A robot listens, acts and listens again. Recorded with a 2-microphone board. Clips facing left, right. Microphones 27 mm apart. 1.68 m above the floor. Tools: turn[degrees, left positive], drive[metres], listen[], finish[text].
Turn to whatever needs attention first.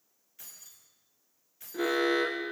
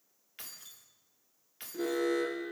Thought: The alarm: about 45° left or 135° left.
Action: turn[45]
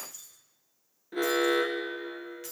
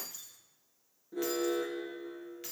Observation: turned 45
Thought: So it is at 80° left.
Action: turn[80]
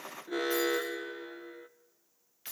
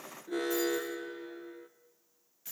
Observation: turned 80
Thought: The alarm is now 15° left.
Action: turn[15]
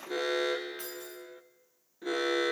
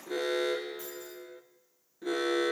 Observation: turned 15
Thought: The alarm is now 10° left.
Action: turn[10]
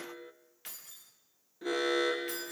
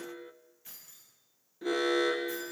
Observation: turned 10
Action: finish[Found it: an alarm, straight ahead.]